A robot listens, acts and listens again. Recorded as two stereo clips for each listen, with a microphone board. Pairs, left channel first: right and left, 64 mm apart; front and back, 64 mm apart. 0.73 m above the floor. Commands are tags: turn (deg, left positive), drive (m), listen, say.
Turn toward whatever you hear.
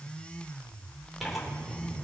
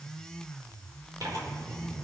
<turn deg="180"/>
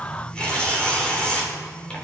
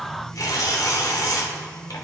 <turn deg="-20"/>
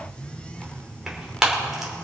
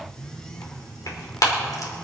<say>Facing the tearing paper.</say>